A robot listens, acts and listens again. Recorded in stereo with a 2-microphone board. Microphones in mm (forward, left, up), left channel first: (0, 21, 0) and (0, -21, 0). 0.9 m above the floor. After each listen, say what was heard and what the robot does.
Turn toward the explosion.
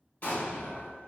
The explosion: about 40° left or 140° left. Turn 40° left.
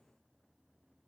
Keep listening.
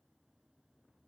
I heard an explosion, but can't make it out now. It was about straight ahead or 100° left.